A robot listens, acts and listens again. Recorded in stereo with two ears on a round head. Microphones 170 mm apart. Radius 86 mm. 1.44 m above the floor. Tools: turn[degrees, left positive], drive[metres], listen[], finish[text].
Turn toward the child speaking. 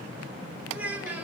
Action: turn[-30]
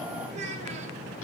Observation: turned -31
Thought: So it is at 140° right.
Action: turn[-140]
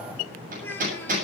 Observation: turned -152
Thought: The child speaking is now 10° left.
Action: turn[10]
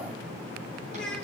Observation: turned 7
Action: finish[Found it: a child speaking, straight ahead.]